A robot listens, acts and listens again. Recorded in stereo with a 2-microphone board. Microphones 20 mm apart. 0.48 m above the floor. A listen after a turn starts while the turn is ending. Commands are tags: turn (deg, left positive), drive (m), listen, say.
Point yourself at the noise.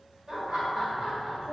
<turn deg="-40"/>
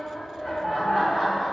<say>Facing the laughter, 1 to 2 m away.</say>